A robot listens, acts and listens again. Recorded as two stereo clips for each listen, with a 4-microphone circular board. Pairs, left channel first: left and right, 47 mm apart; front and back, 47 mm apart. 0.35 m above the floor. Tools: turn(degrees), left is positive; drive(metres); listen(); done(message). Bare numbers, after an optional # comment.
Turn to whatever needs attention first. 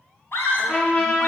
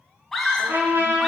# The scream: 80° left.
turn(80)
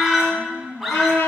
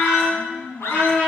done("Found it: a scream, straight ahead.")